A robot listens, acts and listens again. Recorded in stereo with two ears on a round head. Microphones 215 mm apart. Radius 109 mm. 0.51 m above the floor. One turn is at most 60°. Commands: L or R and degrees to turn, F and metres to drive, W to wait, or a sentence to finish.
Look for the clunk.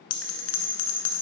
W
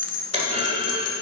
R30
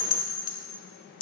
W
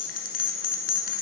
I heard a clunk, but can't make it out now. It was about straight ahead or 120° right.